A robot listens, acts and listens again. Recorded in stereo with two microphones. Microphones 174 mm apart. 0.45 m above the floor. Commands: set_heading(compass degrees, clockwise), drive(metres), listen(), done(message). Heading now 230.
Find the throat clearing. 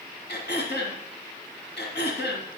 set_heading(140)
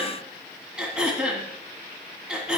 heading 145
done("Facing the throat clearing, 1 to 2 m away.")